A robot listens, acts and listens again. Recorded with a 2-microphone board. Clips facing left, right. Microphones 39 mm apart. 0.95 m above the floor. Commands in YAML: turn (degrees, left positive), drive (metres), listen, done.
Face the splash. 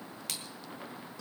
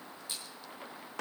turn: 90
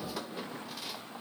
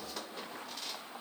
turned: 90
done: "I heard a splash from this way, but can't make it out now."